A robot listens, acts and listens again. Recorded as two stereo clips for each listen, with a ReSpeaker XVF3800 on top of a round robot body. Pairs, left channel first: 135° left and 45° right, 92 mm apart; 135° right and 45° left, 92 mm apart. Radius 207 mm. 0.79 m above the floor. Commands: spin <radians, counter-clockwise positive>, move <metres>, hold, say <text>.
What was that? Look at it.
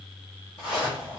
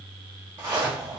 spin 1.92
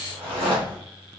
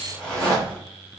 spin -0.35
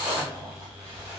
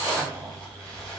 spin -0.17
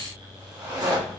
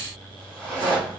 say Facing the zipper, 1 to 2 m away.